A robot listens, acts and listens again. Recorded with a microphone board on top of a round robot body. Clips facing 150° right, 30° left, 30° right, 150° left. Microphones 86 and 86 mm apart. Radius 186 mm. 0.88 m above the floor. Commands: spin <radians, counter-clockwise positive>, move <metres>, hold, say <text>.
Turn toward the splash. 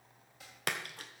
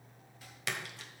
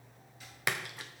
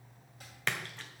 spin -1.92
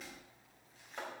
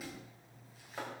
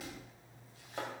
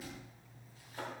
say Facing where the splash came from. I can't hear it now.